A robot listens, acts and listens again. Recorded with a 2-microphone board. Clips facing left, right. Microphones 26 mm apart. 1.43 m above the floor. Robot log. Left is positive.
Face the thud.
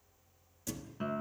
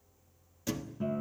note: The thud: about 25° right or 155° right.
cmd yaw -25
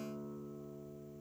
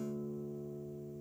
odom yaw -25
cmd idle
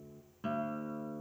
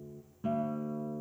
end: I heard a thud, but can't make it out now. It was about straight ahead or 130° right.